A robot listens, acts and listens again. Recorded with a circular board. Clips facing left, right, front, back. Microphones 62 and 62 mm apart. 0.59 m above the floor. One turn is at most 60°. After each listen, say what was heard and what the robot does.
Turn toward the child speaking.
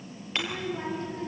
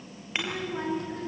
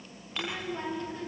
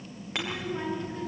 The child speaking: 100° right. Turn 60° right.
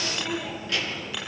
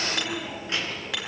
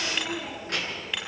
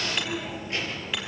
The child speaking is now 25° right. Turn 25° right.
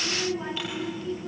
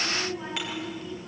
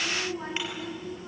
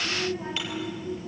Facing the child speaking.